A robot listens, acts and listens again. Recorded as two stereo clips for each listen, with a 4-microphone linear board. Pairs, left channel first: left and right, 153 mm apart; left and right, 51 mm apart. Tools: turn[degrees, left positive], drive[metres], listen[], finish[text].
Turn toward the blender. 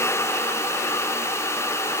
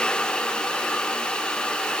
Action: listen[]
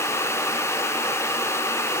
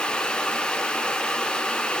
Action: listen[]
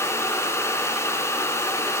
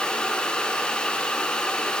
Action: finish[I can't make out a blender.]